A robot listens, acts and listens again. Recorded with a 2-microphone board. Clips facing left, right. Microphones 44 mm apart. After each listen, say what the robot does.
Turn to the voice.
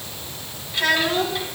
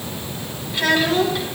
Turn 30° left.
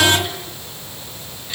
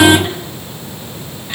Keep listening.
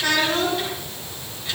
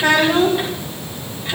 Turn 30° right.
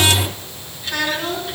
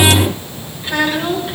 Turn 20° right.
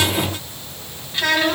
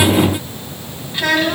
Found it: a child speaking, straight ahead.